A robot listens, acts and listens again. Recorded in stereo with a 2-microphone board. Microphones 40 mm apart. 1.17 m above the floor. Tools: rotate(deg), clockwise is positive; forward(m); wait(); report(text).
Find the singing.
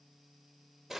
wait()
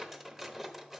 wait()
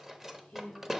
rotate(-50)
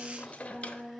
report("Facing the singing, 2 to 4 m away.")